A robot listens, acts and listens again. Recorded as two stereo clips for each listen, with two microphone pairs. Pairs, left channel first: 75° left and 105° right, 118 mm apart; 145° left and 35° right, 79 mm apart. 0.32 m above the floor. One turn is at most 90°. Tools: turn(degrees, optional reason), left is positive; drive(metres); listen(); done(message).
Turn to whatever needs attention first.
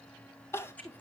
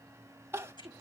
turn(degrees=10, reason="The crying: 10° left.")
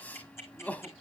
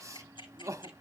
done("Found it: crying, straight ahead.")